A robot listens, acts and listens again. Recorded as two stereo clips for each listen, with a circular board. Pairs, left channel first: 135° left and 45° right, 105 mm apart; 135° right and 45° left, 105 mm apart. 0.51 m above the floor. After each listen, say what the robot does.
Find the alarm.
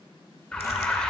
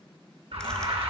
Turn 55° left.
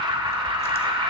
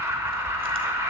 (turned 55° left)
Turn 15° right.
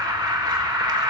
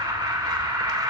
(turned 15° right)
Found it: an alarm, straight ahead, under 1 m away.